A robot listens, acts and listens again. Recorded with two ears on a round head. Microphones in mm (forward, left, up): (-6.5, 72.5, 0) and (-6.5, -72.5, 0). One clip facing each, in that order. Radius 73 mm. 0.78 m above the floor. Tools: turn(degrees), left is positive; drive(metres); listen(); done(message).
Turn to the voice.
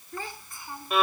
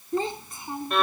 turn(degrees=-20)
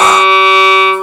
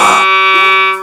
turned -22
listen()
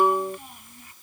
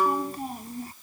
turn(degrees=-35)
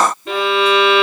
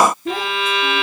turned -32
listen()
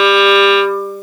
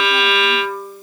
listen()
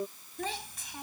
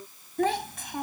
turn(degrees=-130)
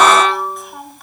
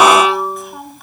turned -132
done("Facing the child speaking.")